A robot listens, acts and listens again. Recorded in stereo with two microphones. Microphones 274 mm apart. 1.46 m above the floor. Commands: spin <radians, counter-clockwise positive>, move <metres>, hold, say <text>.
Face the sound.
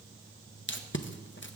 spin 0.79
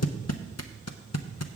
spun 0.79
spin 1.48
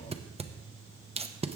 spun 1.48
spin -0.44
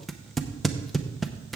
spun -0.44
say Found it: tape being pulled, straight ahead, under 1 m away.